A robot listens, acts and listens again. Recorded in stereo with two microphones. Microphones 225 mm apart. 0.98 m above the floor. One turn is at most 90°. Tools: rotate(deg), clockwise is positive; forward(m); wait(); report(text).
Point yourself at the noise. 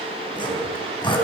rotate(-20)
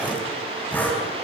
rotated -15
report("Facing the sawing, over 4 m away.")